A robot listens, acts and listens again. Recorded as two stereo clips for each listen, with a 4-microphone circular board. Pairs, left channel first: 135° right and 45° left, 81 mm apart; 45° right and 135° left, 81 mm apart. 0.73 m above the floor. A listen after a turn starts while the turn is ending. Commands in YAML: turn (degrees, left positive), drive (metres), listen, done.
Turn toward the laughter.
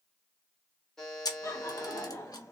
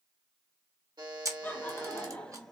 turn: -120
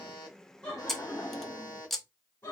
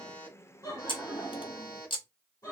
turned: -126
turn: -80
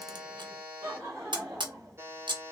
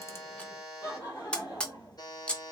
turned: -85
done: "Found it: laughter, straight ahead."